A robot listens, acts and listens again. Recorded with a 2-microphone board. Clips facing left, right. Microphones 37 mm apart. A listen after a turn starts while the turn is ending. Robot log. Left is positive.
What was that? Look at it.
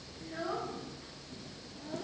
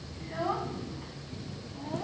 cmd yaw -90
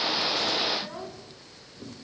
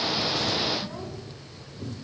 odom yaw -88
cmd idle
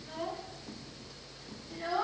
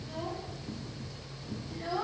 note: The child speaking is now 10° left.
cmd yaw +10
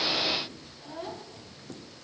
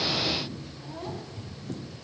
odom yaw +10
end: Found it: a child speaking, straight ahead.